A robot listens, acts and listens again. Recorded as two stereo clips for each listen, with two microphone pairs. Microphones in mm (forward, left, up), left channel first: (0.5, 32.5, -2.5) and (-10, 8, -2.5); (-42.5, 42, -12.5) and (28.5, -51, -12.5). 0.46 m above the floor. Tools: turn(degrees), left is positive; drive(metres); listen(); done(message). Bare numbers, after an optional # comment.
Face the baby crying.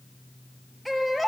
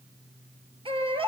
# The baby crying: 15° right.
turn(-15)
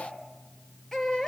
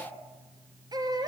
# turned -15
done("Found it: a baby crying, straight ahead, 2 to 4 m away.")